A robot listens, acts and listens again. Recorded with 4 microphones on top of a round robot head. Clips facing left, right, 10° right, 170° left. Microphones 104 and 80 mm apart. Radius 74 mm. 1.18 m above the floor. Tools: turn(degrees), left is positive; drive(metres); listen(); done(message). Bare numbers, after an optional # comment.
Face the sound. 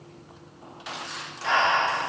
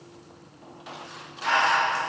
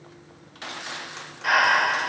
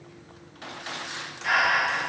# The breathing: 20° left.
turn(20)
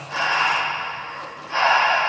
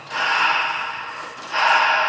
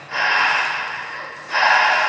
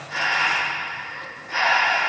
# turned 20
done("Facing the breathing, 1 to 2 m away.")